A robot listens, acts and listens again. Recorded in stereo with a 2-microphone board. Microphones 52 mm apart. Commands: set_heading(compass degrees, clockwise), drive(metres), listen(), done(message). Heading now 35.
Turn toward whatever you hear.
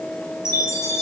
set_heading(330)
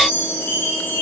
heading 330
set_heading(285)
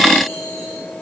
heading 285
listen()
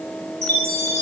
set_heading(265)
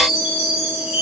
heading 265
set_heading(275)
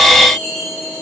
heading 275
done("Facing the chime.")